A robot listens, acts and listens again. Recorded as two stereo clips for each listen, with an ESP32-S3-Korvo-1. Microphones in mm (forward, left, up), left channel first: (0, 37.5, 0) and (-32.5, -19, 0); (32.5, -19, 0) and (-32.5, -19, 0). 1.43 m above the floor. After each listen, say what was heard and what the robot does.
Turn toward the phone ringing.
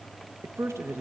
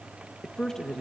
Keep listening.
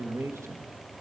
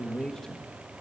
Keep listening.
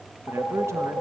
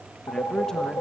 Facing the phone ringing, over 4 m away.